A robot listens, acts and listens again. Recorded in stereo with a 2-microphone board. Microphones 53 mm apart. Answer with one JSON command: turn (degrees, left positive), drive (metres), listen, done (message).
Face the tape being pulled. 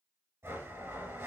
{"listen": true}
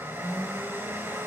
{"listen": true}
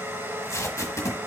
{"turn": 70}
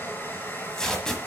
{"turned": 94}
{"turn": 15}
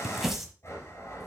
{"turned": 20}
{"done": "Facing the tape being pulled, 1 to 2 m away."}